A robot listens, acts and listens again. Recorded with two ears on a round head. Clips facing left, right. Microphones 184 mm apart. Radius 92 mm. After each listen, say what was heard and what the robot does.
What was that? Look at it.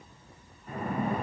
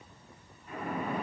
The splash: about 45° left or 135° left. Turn 45° left.
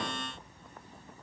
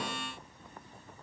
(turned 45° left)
Keep listening.
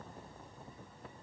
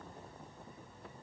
I heard a splash, but can't make it out now. It was about straight ahead or 90° left.